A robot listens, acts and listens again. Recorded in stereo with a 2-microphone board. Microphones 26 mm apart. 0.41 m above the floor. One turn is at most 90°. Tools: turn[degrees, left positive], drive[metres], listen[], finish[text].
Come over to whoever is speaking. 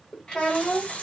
Thought: The child speaking: about 35° left or 145° left.
Action: turn[35]
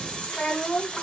Thought: So it is at 110° left.
Action: turn[90]
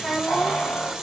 Thought: The child speaking is now 40° left.
Action: turn[40]
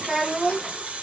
Action: drive[1.0]
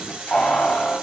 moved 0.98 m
Action: listen[]
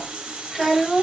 Thought: The child speaking is now 10° right.
Action: turn[-10]
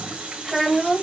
Action: drive[1.0]
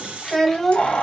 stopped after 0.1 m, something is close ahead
Thought: The child speaking is now 10° left.
Action: turn[10]
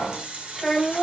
Action: finish[I am next to the child speaking.]